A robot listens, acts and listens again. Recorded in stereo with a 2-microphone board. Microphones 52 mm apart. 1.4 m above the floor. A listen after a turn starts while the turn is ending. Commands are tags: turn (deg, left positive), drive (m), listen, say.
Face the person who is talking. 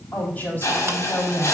<turn deg="35"/>
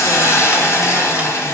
<listen/>
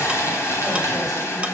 <listen/>
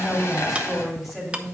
<say>Facing the woman speaking.</say>